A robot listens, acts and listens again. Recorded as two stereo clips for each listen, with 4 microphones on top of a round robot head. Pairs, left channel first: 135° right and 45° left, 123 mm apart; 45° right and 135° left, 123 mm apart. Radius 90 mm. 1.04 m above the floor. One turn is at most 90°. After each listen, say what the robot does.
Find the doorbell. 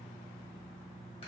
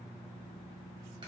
Keep listening.
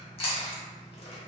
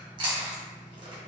Keep listening.
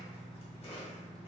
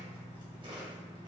I can't make out a doorbell, only chewing.